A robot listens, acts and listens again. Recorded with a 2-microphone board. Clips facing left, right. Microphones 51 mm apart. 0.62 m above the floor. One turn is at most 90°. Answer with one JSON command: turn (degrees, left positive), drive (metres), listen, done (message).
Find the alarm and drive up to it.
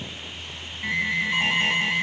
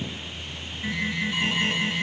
{"turn": 60}
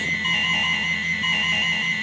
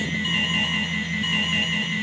{"turn": 65}
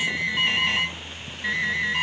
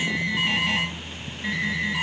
{"drive": 1.0}
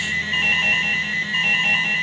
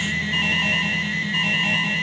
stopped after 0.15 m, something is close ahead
{"done": "Blocked. The alarm is further on, straight ahead."}